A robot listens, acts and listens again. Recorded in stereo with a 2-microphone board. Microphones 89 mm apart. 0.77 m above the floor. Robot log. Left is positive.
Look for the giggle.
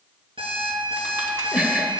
cmd yaw -30
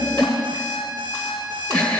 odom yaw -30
note: So it is at 15° left.
cmd yaw +15
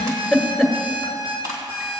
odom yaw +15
end: Found it: a giggle, straight ahead.